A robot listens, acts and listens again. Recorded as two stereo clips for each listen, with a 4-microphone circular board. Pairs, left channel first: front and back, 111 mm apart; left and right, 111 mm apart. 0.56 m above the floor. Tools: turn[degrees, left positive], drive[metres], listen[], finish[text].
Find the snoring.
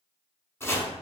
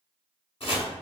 Action: listen[]
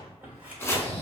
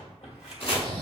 Thought: The snoring: 115° right.
Action: turn[-115]
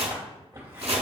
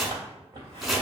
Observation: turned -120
Action: listen[]
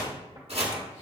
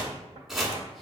Action: listen[]
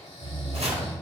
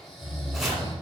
Action: finish[Facing the snoring, 1 to 2 m away.]